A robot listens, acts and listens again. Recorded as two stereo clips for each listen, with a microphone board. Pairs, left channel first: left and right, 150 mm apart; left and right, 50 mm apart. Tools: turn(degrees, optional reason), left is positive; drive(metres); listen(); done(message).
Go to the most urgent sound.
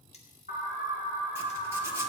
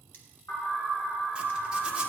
turn(degrees=90)
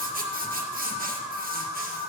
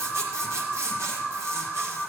drive(metres=1.0)
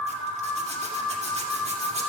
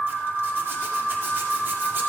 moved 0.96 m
drive(metres=1.0)
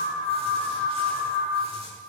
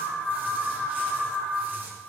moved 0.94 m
drive(metres=1.0)
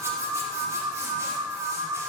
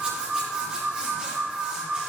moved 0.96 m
turn(degrees=-10, reason="The alarm is now 10° right.")
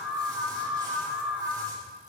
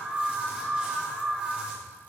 drive(metres=1.0)
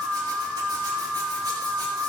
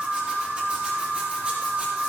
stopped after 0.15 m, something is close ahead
done("Arrived at the alarm, straight ahead.")